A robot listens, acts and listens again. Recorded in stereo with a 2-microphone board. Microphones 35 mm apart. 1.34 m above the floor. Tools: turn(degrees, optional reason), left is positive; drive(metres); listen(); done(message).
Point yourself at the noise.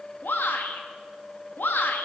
turn(degrees=90)
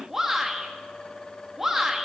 turn(degrees=-10, reason="So it is at 10° right.")
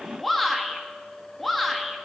done("Facing the shout, 1 to 2 m away.")